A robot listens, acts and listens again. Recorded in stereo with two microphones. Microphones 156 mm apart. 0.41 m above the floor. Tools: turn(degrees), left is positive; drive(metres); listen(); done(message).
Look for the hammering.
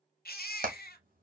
turn(degrees=-65)
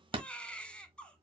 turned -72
turn(degrees=-35)
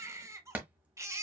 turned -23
turn(degrees=-10)
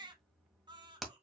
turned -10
done("Facing the hammering, 1 to 2 m away.")